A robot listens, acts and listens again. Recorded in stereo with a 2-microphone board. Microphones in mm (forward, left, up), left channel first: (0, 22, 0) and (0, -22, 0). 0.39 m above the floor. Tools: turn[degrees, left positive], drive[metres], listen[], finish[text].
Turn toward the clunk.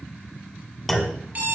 Action: turn[30]
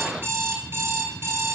Action: listen[]
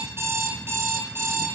Action: finish[I heard a clunk, but can't make it out now. It was about 30° right or 150° left.]